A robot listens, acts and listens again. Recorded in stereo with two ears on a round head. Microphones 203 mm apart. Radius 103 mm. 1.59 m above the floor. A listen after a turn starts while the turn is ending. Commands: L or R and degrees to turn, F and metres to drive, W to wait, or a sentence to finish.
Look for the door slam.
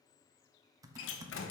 L65
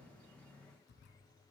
W
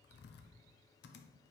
I heard a door slam, but can't make it out now. It was about straight ahead or 50° left.